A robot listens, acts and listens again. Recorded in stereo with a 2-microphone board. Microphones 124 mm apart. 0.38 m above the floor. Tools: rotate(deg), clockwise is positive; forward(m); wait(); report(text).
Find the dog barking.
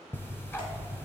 wait()
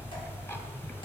wait()
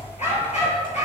rotate(-65)
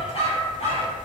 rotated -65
rotate(-55)
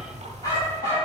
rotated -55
rotate(-30)
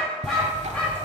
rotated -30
report("Facing the dog barking.")